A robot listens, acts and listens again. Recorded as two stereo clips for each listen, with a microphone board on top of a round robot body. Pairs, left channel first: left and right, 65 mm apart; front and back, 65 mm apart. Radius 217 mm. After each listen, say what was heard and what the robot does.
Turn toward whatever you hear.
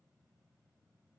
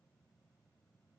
Keep listening.
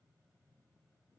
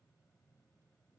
Keep listening.
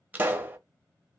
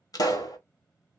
The pop: 25° right. Turn 25° right.
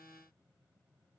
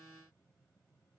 Facing where the pop came from. I can't hear it now.